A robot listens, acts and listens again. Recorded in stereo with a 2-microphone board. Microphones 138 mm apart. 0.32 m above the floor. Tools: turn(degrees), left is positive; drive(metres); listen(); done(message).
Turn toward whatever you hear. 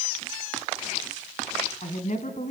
turn(degrees=60)
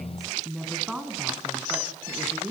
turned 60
turn(degrees=-15)
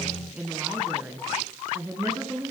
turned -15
turn(degrees=-20)
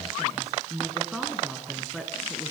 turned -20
done("Facing the woman speaking, over 4 m away.")